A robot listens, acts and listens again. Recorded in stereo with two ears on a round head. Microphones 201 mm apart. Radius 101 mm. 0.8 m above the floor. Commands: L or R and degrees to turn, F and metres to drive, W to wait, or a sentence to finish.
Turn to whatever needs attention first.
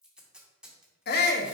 L45
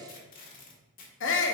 L75
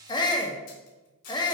L20
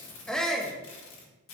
Found it: a shout, straight ahead, 1 to 2 m away.